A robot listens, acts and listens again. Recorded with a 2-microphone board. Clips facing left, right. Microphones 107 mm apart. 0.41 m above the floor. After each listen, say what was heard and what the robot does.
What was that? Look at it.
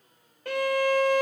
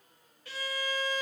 The violin: about 65° left or 115° left. Turn 65° left.
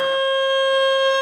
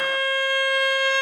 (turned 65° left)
So it is at 25° left. Turn 25° left.
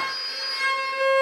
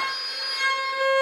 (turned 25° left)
Found it: a violin, straight ahead.